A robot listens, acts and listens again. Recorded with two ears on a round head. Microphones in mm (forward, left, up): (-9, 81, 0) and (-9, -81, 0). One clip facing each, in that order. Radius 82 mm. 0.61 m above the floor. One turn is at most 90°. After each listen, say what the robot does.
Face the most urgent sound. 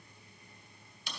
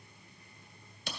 Keep listening.
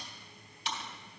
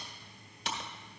Keep listening.
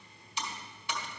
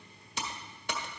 I can't make out anything urgent to turn to.